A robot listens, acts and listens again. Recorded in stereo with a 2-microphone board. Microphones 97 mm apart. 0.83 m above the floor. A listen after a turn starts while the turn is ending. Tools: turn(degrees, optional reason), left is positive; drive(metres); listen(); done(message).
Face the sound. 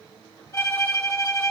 turn(degrees=35, reason="The violin: about 35° left or 145° left.")
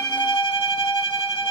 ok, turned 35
turn(degrees=115, reason="So it is at 115° left.")
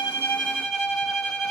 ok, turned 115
done("Found it: a violin, straight ahead.")